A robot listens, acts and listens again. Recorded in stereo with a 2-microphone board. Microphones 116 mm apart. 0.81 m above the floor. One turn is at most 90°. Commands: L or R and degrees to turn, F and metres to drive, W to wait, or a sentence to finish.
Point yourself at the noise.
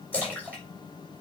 L30
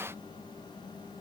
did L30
W
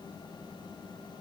I heard a splash, but can't make it out now. It was about 20° right or 140° left.